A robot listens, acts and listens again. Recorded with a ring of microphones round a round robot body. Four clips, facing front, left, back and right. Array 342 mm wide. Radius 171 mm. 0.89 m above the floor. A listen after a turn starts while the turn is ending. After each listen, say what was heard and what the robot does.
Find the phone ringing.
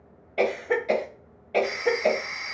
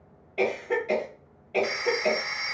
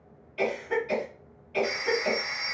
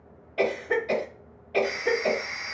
The phone ringing: 110° left. Turn 110° left.
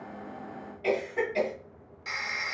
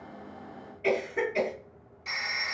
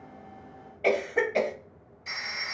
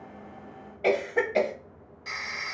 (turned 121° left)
The phone ringing is now 10° right. Turn 10° right.
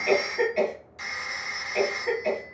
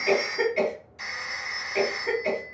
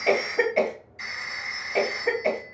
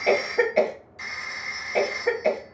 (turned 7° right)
Found it: a phone ringing, straight ahead, 2 to 4 m away.